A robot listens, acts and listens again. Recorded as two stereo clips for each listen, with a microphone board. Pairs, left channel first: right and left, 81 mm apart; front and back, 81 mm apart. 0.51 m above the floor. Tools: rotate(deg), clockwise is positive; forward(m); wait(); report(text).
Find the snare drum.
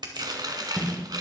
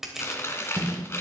rotate(-170)
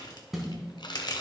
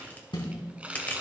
report("Found it: a snare drum, straight ahead.")